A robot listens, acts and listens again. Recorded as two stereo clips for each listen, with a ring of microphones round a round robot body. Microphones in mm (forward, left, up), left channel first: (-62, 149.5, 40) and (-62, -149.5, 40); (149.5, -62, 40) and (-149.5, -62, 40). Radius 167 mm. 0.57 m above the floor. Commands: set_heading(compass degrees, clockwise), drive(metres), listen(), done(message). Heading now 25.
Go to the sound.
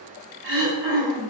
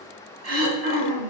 set_heading(165)
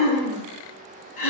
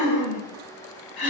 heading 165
set_heading(145)
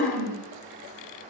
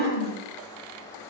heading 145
drive(1.0)
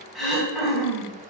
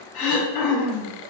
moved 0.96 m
drive(1.0)
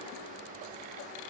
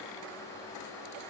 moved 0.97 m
listen()
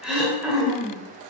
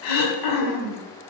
drive(1.0)
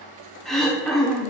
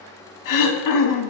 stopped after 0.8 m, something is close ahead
done("I am next to the throat clearing.")